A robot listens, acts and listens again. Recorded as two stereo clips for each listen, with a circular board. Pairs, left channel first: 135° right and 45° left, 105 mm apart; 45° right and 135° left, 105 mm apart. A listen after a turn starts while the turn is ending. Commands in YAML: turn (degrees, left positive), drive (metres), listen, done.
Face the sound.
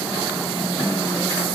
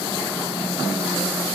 listen: true
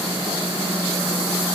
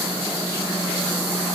listen: true
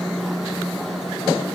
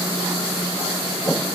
done: "I can't make out anything."